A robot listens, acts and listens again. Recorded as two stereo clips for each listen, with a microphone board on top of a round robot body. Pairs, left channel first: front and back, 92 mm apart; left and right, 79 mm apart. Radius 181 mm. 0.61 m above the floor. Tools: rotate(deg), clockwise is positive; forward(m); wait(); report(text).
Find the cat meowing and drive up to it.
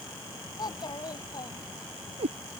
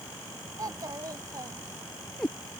rotate(-175)
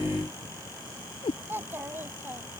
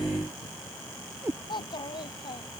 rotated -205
rotate(30)
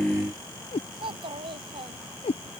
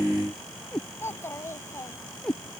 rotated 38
rotate(-10)
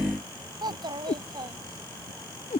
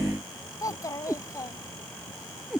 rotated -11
forward(1.0)
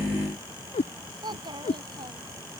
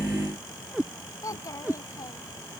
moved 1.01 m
rotate(10)
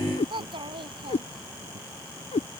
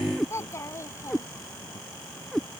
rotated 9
forward(1.0)
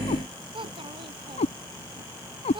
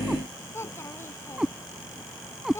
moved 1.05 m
forward(1.0)
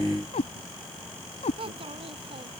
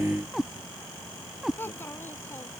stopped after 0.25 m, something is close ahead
report("Arrived at the cat meowing, straight ahead.")